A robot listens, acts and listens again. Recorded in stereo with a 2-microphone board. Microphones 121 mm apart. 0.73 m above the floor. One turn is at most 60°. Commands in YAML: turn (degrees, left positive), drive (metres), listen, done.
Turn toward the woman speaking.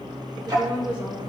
turn: -30
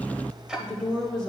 done: "Facing the woman speaking."